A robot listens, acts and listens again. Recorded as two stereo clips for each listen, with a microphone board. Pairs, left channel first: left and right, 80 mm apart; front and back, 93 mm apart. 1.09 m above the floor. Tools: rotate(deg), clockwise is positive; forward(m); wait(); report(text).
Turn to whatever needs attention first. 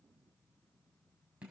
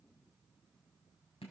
wait()
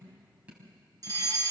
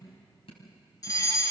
rotate(50)
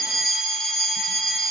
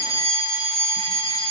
report("Found it: a fire alarm, straight ahead.")